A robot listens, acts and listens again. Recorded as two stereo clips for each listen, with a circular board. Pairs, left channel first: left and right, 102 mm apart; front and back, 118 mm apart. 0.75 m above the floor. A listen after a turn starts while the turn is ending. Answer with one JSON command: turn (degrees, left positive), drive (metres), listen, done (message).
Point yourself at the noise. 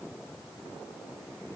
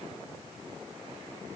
{"listen": true}
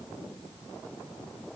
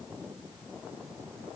{"listen": true}
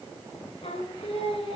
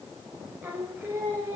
{"turn": 110}
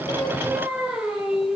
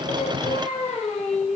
{"done": "Facing the singing, 2 to 4 m away."}